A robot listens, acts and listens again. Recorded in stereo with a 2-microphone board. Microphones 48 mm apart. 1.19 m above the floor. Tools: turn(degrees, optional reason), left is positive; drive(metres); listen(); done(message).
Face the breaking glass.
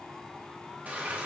listen()
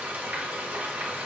listen()
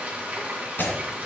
turn(degrees=50, reason="The breaking glass: about 50° left or 130° left.")
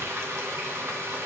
listen()
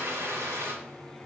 done("I heard breaking glass, but can't make it out now. It was about straight ahead or 80° left.")